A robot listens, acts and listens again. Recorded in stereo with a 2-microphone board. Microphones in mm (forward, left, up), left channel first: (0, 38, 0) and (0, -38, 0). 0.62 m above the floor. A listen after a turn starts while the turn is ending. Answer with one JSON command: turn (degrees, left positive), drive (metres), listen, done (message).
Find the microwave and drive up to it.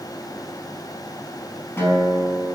{"listen": true}
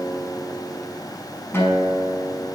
{"listen": true}
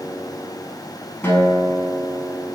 {"done": "I can't make out a microwave, only a guitar."}